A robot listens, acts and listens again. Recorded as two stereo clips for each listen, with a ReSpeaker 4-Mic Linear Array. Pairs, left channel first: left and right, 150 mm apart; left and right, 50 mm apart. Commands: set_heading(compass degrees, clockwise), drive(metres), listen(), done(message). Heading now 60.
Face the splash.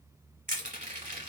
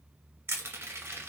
listen()
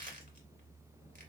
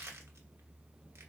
listen()
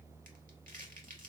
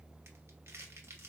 done("I can't make out a splash to turn to.")